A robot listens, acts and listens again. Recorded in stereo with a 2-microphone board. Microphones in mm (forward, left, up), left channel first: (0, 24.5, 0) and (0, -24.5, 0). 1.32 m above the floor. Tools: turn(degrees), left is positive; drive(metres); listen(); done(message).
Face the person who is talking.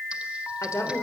turn(degrees=90)
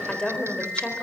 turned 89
turn(degrees=20)
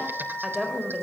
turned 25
done("Facing the woman speaking, over 4 m away.")